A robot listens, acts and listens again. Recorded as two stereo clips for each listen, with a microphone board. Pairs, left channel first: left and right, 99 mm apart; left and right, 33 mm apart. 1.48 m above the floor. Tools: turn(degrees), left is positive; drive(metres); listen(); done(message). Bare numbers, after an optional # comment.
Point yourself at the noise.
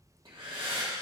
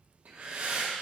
# The breathing: about 60° right or 120° right.
turn(-60)
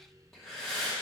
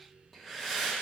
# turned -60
done("Facing the breathing, 1 to 2 m away.")